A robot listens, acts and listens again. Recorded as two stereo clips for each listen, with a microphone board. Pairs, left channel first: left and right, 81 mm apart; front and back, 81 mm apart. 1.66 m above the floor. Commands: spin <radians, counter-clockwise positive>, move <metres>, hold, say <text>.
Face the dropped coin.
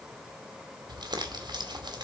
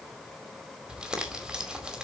hold
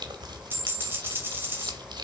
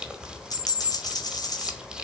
spin -0.52
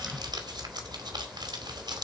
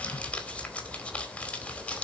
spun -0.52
say Facing where the dropped coin came from. I can't hear it now.